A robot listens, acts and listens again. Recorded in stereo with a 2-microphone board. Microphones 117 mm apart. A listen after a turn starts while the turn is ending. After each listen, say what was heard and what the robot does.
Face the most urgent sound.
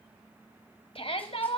The shout: about 55° left or 125° left. Turn 55° left.
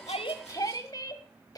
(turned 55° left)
So it is at 40° left. Turn 40° left.
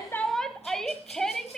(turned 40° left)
Found it: a shout, straight ahead.